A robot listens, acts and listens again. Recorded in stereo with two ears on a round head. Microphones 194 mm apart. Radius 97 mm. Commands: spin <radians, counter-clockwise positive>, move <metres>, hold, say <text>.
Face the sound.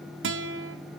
spin -1.05
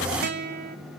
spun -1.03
spin -0.87
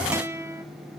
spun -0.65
spin -0.26
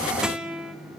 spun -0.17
say Found it: a guitar, straight ahead, 1 to 2 m away.